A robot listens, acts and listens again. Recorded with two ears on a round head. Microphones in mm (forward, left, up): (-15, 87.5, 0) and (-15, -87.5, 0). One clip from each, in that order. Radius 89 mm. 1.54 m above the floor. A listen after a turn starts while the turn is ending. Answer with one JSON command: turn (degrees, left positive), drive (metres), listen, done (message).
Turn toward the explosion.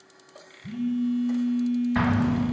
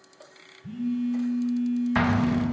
{"turn": -40}
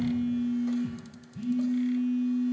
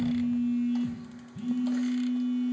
{"listen": true}
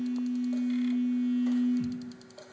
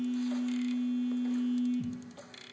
{"done": "I heard an explosion, but can't make it out now. It was about straight ahead or 100° right."}